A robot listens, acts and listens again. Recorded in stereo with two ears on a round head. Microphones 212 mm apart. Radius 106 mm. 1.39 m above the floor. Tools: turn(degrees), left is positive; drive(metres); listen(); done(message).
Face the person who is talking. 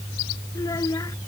turn(degrees=15)
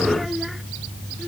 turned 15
turn(degrees=30)
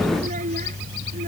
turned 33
turn(degrees=-35)
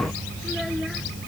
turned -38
listen()
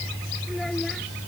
listen()
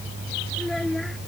done("Facing the child speaking.")